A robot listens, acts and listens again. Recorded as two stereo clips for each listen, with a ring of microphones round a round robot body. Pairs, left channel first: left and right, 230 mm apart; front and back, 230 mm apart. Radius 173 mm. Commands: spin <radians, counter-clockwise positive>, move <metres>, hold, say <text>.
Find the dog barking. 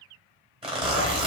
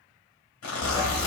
spin -1.66
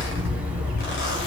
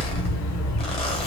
say Found it: a dog barking, straight ahead, 1 to 2 m away.